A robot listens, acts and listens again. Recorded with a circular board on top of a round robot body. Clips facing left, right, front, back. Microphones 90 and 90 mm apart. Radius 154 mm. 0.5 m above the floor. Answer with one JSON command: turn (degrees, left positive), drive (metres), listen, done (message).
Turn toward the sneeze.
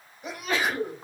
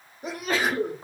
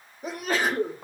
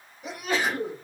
{"turn": -40}
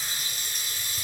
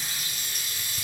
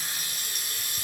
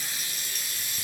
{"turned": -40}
{"done": "I heard a sneeze from this way, but can't make it out now."}